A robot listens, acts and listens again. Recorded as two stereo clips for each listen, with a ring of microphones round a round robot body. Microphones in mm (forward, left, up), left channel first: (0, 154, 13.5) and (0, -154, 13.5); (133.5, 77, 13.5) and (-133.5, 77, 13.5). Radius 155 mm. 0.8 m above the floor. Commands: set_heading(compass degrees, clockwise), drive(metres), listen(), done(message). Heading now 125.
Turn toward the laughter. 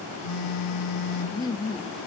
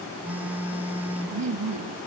set_heading(320)
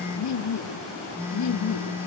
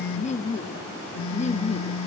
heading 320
set_heading(260)
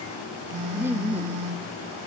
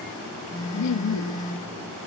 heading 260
done("Found it: laughter, straight ahead.")